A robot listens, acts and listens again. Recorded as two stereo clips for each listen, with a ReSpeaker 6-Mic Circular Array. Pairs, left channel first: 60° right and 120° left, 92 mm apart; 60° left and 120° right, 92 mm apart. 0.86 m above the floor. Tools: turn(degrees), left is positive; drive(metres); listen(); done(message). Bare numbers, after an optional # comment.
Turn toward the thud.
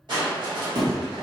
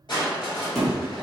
# The thud: 150° left.
turn(150)
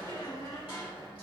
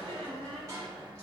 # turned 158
# Nothing new. It was at 10° right.
turn(-10)
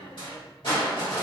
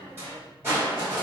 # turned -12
done("Facing where the thud came from. I can't hear it now.")